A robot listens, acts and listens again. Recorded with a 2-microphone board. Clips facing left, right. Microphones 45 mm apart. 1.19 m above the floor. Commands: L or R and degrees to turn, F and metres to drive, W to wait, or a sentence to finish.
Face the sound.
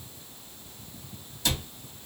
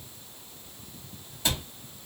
R20
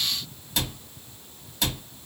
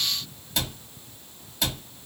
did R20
Facing the cupboard door, 1 to 2 m away.